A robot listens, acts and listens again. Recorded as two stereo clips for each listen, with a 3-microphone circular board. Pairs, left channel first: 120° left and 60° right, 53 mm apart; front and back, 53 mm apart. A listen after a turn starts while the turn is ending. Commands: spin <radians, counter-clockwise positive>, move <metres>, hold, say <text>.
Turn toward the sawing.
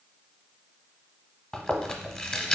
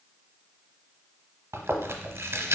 hold
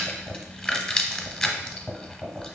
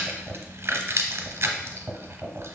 hold
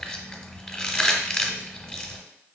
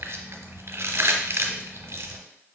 say I can't make out sawing to turn to.